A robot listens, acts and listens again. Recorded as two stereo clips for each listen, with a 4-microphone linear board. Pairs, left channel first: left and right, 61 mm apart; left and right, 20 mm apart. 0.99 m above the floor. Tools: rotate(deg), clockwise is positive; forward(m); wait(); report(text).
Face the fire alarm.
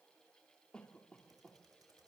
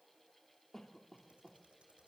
wait()
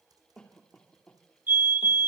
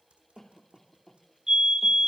rotate(35)
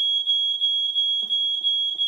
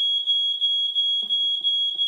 report("Facing the fire alarm, 2 to 4 m away.")